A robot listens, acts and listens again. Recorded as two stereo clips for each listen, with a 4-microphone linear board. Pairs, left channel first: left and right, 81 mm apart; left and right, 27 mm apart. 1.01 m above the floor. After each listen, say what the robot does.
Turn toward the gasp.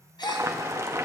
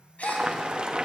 Turn 75° left.
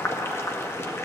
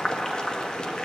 Keep listening.
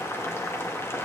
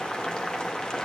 I heard a gasp, but can't make it out now. It was about straight ahead or 30° left.